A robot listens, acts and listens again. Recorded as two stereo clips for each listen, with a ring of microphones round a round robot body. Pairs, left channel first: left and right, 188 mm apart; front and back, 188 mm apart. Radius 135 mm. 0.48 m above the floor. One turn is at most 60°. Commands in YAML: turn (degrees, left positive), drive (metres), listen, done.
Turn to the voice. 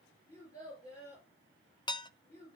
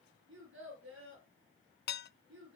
turn: 60
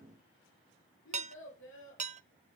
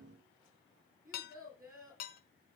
turn: 60
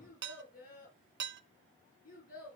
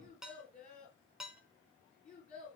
turn: 50
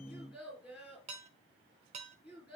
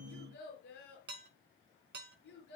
done: "Found it: a child speaking, straight ahead, over 4 m away."